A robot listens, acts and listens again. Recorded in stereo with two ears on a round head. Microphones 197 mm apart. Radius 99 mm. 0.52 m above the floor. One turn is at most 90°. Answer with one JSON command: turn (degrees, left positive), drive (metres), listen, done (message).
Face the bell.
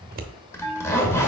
{"turn": 30}
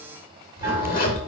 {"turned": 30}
{"listen": true}
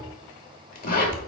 {"listen": true}
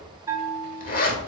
{"turn": -20}
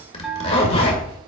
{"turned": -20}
{"done": "Facing the bell."}